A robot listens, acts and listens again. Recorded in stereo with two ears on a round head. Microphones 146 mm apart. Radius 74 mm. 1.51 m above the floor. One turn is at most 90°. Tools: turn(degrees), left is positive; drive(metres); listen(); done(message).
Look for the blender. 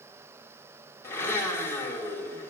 turn(degrees=15)
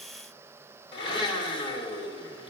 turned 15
turn(degrees=90)
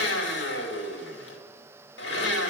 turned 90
turn(degrees=75)
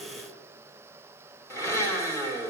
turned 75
turn(degrees=15)
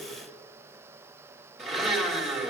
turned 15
done("Found it: a blender, straight ahead.")